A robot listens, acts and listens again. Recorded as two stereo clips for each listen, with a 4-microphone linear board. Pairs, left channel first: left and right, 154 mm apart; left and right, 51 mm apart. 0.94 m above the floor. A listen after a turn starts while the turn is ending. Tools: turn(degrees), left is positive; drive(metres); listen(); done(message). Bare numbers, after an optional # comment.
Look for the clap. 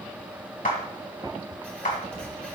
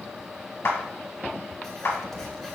# The clap: about 60° left or 120° left.
turn(60)
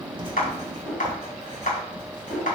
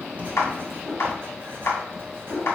# So it is at 60° left.
turn(60)
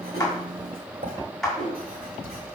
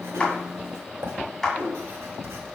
done("Found it: a clap, straight ahead, 1 to 2 m away.")